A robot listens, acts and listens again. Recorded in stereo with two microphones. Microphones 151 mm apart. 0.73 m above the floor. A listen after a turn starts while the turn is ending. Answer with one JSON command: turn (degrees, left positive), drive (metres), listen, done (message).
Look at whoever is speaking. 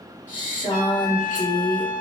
{"turn": 60}
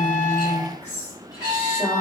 {"turn": 55}
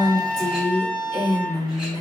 {"turn": 25}
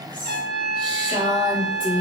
{"turn": 10}
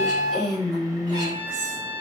{"done": "Found it: a woman speaking, straight ahead."}